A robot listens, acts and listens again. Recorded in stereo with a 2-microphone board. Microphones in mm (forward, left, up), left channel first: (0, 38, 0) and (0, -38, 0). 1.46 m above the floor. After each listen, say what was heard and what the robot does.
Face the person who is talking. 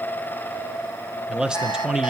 Turn 30° right.
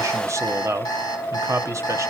So it is at 140° right. Turn 140° right.
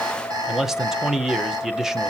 Facing the man speaking, 1 to 2 m away.